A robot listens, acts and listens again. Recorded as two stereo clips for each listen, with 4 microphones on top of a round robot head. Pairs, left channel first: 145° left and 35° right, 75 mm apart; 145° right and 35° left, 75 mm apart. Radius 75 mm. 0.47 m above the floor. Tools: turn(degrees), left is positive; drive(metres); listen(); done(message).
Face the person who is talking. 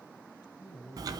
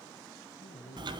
turn(degrees=-130)
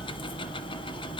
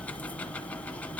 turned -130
listen()
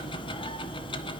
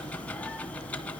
listen()
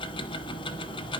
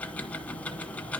done("Facing where the man speaking came from. I can't hear it now.")